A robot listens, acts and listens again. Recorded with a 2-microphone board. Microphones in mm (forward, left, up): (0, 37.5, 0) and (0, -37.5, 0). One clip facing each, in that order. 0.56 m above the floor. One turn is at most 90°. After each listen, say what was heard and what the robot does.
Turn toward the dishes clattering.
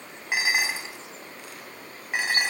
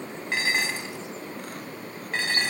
Turn 30° left.
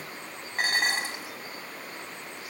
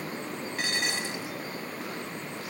So it is at 135° left. Turn 90° left.
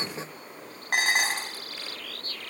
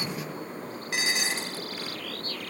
The dishes clattering is now 55° left. Turn 55° left.
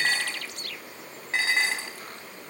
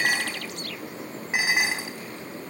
The dishes clattering is now 15° right. Turn 15° right.
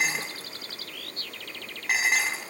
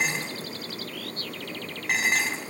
Facing the dishes clattering.